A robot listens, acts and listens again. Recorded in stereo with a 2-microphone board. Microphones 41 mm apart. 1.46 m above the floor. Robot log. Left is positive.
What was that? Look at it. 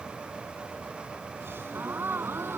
note: The gasp: about 65° right or 115° right.
cmd yaw -65
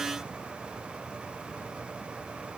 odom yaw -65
cmd idle
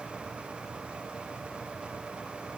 end: I heard a gasp, but can't make it out now. It was about straight ahead or 50° right.